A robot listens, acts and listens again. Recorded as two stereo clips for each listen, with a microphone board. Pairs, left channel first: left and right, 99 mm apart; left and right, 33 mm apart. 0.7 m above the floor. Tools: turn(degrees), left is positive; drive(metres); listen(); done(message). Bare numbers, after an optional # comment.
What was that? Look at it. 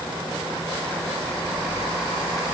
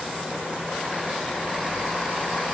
listen()
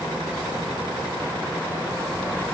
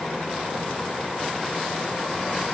listen()
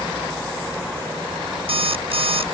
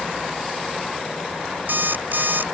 # The alarm clock: about 75° right or 105° right.
turn(-75)
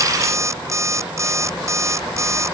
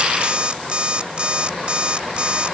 # So it is at 30° right.
turn(-30)
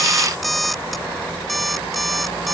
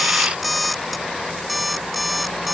done("Facing the alarm clock.")